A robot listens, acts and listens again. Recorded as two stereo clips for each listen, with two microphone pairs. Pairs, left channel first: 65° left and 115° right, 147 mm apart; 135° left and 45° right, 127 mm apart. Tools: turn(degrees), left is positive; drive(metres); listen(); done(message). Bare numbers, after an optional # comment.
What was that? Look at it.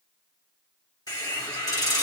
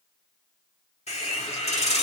# The hiss: 120° left.
turn(120)
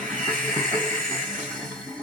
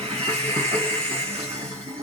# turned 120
# The hiss is now 20° right.
turn(-20)
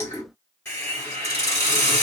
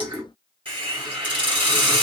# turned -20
done("Found it: a hiss, straight ahead, 1 to 2 m away.")